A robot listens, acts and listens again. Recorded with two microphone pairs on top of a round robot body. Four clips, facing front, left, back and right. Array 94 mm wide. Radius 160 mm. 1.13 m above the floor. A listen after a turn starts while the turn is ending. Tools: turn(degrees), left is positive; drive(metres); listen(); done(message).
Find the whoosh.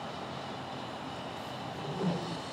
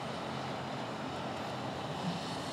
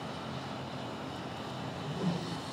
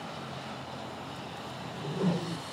turn(degrees=-85)
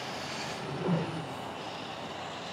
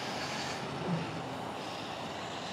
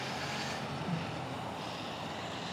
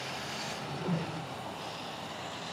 turn(degrees=-10)
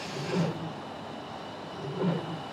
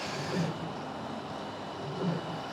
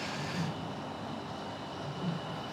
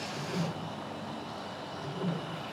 done("Found it: a whoosh, straight ahead.")